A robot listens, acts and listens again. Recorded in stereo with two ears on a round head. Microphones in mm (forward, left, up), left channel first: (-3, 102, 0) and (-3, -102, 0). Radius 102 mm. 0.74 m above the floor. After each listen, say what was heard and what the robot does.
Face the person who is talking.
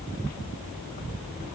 Keep listening.
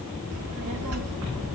The child speaking: about 70° right or 110° right. Turn 70° right.
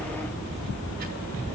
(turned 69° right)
So it is at 40° right. Turn 40° right.
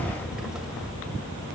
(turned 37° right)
Facing the child speaking, 2 to 4 m away.